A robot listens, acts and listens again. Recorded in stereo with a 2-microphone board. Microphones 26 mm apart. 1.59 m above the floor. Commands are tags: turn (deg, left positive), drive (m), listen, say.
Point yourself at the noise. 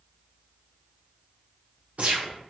<turn deg="-70"/>
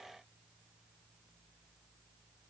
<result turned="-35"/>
<listen/>
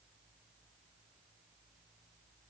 <say>I heard a gunshot, but can't make it out now. It was about 35° right or 75° right.</say>